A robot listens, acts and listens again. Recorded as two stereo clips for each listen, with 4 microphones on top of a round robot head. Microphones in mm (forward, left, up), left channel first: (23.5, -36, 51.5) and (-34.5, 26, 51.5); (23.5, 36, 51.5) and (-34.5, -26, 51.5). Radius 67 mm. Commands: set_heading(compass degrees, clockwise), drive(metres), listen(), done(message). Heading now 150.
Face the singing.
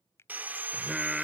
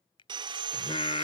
set_heading(100)
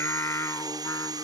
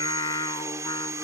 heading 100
set_heading(90)
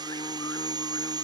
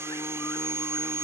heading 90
done("Facing the singing.")